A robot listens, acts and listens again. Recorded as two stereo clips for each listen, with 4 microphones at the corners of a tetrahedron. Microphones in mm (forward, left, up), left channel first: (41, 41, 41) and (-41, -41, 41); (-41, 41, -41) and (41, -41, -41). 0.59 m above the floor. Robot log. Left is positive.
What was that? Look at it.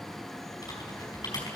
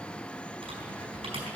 note: The typing on a keyboard: 10° right.
cmd yaw -10
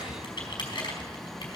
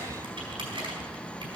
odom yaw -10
end: Found it: typing on a keyboard, straight ahead.